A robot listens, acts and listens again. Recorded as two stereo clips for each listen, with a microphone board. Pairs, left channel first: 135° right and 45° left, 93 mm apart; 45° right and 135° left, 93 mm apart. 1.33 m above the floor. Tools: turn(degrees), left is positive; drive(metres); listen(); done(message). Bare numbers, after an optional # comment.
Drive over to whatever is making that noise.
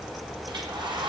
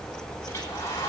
# The hair dryer: 10° left.
turn(10)
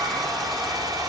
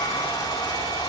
drive(1.0)
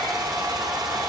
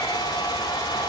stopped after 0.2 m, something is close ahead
done("Something is in my way. I am facing the hair dryer but have not reached it.")